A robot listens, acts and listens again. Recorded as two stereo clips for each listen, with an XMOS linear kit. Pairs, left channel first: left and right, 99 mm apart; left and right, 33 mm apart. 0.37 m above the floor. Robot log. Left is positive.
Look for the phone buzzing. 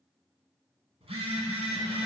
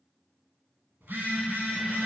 note: The phone buzzing: about 70° right or 110° right.
cmd yaw -70
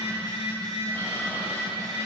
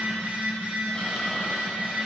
note: So it is at 40° right.
cmd yaw -40
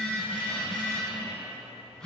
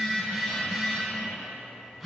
end: Found it: a phone buzzing, straight ahead, 1 to 2 m away.